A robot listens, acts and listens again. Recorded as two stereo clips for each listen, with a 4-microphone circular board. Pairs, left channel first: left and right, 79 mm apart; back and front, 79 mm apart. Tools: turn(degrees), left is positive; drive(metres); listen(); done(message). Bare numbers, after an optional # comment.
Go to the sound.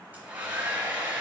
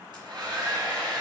# The hair dryer: 20° right.
turn(-20)
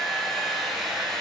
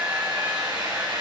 drive(1.0)
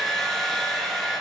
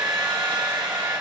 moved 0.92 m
drive(1.0)
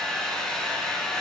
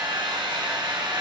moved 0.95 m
# The hair dryer is now 10° left.
turn(10)
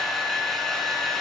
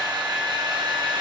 drive(1.0)
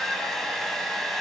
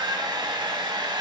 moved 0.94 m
drive(1.0)
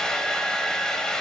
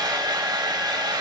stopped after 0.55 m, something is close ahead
# The hair dryer is now 10° left.
turn(10)
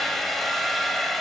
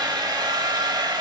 done("I am next to the hair dryer.")